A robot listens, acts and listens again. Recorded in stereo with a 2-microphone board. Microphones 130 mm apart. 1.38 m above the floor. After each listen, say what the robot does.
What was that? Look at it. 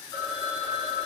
Turn 30° left.
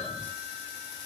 Facing the phone ringing.